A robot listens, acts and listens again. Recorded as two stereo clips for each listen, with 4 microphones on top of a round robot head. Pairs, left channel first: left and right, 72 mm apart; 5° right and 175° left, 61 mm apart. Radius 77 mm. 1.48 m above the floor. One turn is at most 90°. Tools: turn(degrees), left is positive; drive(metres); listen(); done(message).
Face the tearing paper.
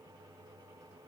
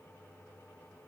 listen()
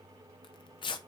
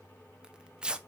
turn(degrees=90)
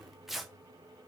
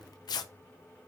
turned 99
done("Found it: tearing paper, straight ahead.")